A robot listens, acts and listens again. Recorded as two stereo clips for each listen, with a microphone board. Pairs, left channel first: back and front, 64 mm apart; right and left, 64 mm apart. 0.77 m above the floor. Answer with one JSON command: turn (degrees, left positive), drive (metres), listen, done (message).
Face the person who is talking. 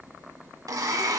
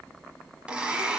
{"listen": true}
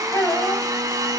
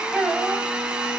{"turn": 170}
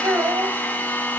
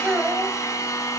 {"turn": 30}
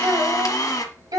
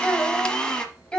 {"turn": -15}
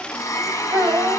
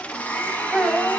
{"done": "Found it: a child speaking, straight ahead."}